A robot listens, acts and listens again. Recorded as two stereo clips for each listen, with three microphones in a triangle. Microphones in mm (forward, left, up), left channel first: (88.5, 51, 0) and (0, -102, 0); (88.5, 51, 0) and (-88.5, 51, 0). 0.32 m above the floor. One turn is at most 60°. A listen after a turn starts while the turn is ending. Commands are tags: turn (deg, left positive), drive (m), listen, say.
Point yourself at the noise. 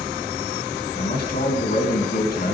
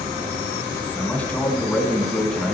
<turn deg="60"/>
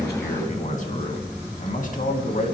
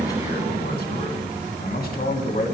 <turn deg="25"/>
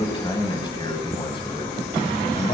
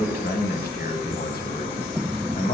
<turn deg="10"/>
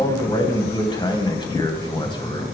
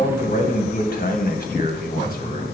<say>Found it: a man speaking, straight ahead.</say>